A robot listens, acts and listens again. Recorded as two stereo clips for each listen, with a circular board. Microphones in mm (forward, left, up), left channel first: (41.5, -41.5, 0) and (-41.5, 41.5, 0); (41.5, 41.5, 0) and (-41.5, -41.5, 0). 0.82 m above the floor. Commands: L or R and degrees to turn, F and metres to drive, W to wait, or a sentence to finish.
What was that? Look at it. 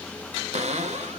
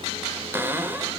L155
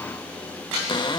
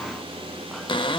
Facing the cupboard door.